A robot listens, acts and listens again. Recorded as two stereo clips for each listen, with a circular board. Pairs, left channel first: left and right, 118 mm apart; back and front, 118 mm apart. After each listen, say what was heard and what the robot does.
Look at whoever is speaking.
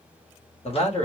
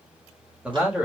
The man speaking: 75° left. Turn 75° left.
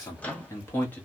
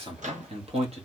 The man speaking is now 15° left. Turn 15° left.
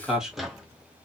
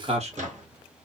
Found it: a man speaking, straight ahead.